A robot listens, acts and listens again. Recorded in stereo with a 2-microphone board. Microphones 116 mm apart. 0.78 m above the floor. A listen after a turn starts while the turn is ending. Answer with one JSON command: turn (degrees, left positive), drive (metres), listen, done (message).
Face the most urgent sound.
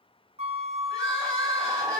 {"turn": -30}
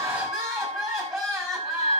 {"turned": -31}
{"done": "Found it: crying, straight ahead."}